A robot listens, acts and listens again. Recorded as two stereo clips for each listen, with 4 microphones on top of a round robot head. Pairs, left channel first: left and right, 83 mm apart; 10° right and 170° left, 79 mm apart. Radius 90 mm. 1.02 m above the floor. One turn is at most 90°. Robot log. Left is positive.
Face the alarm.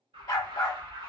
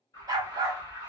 note: The alarm: 65° right.
cmd yaw -65
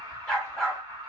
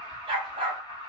note: The alarm is now 25° right.
cmd yaw -25
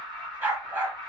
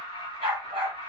end: Facing the alarm, under 1 m away.